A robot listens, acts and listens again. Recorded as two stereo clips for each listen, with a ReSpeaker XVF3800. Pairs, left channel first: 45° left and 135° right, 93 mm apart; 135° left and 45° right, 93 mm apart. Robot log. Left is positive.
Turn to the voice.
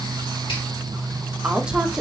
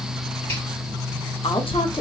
note: The woman speaking: 140° left.
cmd yaw +140
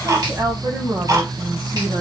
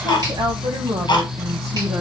note: The woman speaking is now 90° right.
cmd yaw -90
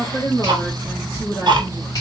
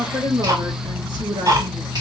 end: Facing the woman speaking.